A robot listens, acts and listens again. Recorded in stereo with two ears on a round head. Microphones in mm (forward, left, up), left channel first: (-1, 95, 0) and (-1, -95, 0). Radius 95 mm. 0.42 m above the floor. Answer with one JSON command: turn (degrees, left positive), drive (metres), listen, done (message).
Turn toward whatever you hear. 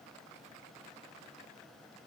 {"listen": true}
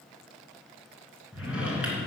{"turn": -30}
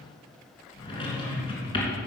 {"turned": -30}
{"turn": 25}
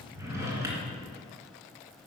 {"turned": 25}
{"turn": -15}
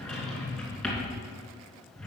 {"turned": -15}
{"done": "Found it: a drawer, straight ahead."}